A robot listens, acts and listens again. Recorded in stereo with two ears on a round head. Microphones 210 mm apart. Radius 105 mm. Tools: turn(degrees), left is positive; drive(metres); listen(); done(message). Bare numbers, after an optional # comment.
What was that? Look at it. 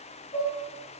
turn(30)
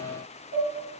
# So it is at 135° left.
turn(135)
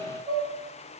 done("Found it: dishes clattering, straight ahead.")